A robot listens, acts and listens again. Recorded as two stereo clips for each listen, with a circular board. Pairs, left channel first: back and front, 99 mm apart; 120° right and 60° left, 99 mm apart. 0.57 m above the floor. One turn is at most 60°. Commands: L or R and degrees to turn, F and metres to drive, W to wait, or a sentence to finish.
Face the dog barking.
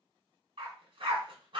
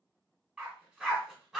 R25
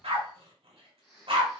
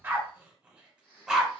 R25
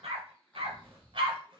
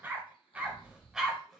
R25
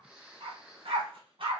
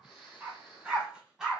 R25
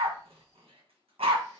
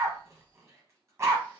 Found it: a dog barking, straight ahead.